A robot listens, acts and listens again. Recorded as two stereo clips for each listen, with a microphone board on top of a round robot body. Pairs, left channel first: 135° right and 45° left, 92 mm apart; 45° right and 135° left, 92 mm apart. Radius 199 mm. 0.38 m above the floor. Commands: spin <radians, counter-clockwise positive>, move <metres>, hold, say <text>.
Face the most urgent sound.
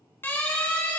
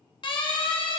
spin -1.22
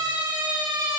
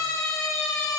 spin 0.17
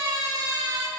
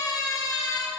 say Found it: a siren, straight ahead.